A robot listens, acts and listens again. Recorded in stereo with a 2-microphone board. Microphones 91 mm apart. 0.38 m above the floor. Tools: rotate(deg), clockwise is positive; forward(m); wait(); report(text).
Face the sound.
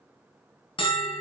rotate(-70)
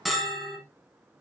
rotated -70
report("Found it: a bell, straight ahead, 1 to 2 m away.")